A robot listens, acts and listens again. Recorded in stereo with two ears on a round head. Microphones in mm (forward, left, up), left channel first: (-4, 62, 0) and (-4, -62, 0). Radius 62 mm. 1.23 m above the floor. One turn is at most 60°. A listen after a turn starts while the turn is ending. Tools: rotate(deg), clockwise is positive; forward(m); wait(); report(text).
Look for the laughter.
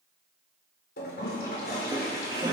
rotate(30)
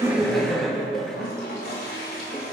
report("Found it: laughter, straight ahead.")